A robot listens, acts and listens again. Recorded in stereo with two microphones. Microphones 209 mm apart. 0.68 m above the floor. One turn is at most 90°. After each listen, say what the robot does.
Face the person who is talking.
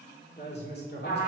Turn 55° left.
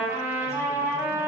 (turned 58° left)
Keep listening.
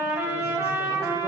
Keep listening.
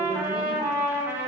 I heard a woman speaking, but can't make it out now. It was about 5° right or 70° left.